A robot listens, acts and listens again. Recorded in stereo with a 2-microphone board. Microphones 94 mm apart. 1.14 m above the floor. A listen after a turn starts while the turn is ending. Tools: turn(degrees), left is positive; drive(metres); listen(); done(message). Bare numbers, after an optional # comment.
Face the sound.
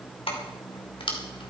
# The keys jangling: about 70° left or 110° left.
turn(70)
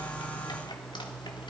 listen()
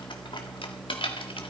# So it is at 70° left.
turn(70)
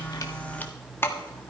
# The keys jangling is now 25° left.
turn(25)
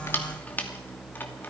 # The keys jangling is now 20° left.
turn(20)
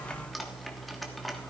done("Facing the keys jangling, 1 to 2 m away.")